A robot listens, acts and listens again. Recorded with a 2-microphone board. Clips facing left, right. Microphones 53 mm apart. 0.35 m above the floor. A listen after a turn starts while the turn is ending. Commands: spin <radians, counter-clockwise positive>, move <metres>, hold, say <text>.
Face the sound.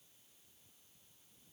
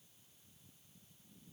hold
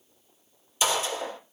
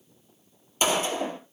spin -0.70
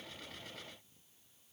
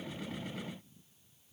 hold
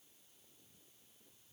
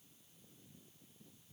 say I heard a gunshot, but can't make it out now. It was about straight ahead or 100° right.